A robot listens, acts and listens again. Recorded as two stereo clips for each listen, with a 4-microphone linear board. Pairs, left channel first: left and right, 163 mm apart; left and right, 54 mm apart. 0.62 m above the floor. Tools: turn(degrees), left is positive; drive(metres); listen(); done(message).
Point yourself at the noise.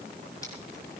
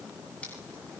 listen()
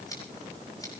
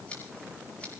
turn(degrees=20)
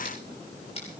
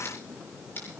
turn(degrees=145)
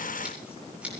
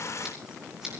done("Found it: scissors, straight ahead, over 4 m away.")